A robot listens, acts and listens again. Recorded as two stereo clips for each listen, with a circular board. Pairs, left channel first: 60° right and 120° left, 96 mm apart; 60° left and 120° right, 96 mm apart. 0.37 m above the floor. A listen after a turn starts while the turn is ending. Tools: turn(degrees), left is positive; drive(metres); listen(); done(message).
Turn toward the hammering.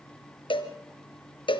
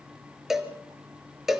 listen()
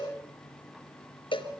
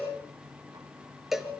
listen()
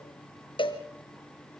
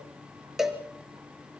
done("I can't make out hammering to turn to.")